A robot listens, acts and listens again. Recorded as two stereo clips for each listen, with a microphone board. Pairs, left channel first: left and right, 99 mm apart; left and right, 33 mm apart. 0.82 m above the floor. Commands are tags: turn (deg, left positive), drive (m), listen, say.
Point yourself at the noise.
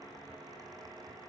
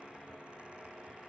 <listen/>
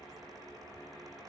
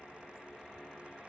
<listen/>
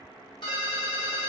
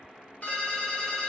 <turn deg="50"/>
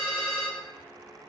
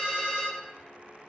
<say>Found it: a ringtone, straight ahead, under 1 m away.</say>